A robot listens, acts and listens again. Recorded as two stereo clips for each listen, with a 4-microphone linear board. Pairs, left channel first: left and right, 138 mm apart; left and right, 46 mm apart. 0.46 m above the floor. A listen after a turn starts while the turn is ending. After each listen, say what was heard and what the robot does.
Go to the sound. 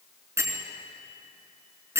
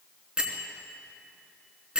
The bell: about 20° right or 160° right. Turn 20° right.
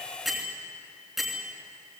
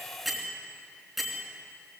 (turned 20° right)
Drive 1.0 m forward.
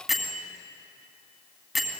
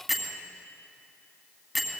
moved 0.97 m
Drive 1.0 m forward.
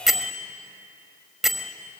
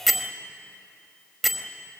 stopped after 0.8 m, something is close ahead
Arrived at the bell, straight ahead.